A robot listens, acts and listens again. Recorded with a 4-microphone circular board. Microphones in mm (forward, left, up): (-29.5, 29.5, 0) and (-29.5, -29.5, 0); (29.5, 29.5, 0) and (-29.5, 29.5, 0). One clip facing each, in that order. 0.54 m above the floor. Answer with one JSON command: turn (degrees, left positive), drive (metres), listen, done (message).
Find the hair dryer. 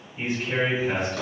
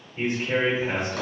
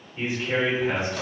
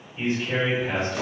{"listen": true}
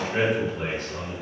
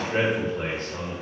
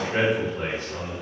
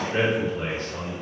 {"listen": true}
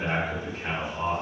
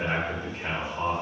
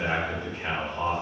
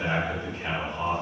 {"done": "I can't make out a hair dryer, only a drawer and a man speaking."}